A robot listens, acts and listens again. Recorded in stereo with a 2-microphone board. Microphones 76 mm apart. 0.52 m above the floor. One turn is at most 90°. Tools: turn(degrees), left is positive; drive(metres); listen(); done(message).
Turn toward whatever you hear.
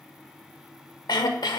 turn(degrees=70)
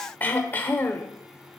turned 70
turn(degrees=25)
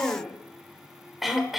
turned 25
done("Found it: throat clearing, straight ahead, under 1 m away.")